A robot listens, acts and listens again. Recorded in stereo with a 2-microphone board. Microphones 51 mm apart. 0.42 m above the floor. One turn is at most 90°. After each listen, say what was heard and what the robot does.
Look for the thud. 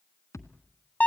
Turn 90° left.
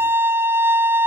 Facing where the thud came from. I can't hear it now.